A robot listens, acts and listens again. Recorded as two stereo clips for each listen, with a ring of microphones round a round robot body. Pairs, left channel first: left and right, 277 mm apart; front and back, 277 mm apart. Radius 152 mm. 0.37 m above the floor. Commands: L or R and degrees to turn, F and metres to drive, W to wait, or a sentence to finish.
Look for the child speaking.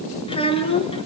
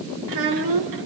L160
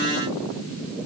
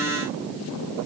W
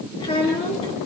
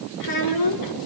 L15
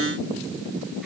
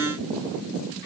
W
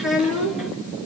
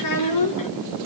Facing the child speaking.